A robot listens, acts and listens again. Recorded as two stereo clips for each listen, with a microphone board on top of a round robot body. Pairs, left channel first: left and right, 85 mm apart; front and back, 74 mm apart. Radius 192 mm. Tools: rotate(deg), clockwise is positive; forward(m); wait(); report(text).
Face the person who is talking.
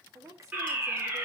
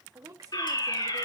rotate(140)
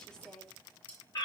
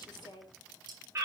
rotate(-10)
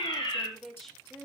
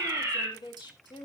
report("Facing the woman speaking.")